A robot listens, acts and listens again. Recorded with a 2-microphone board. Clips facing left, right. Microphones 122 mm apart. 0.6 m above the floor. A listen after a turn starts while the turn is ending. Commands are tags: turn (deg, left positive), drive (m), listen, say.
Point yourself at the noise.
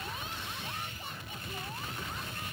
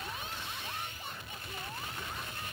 <listen/>
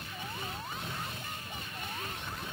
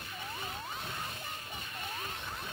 <listen/>
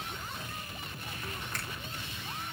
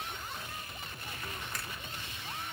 <turn deg="30"/>
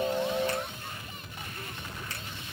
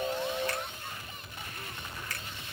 <turn deg="150"/>
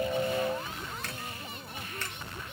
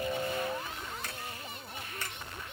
<turn deg="-10"/>
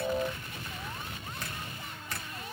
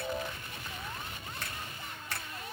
<say>Facing the finger snap.</say>